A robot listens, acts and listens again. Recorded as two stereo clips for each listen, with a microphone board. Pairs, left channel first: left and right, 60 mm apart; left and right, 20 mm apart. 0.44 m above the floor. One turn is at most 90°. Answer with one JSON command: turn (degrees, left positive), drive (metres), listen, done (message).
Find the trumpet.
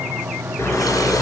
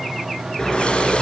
{"listen": true}
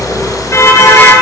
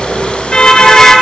{"listen": true}
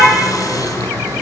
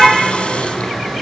{"done": "I can't make out a trumpet, only a car horn."}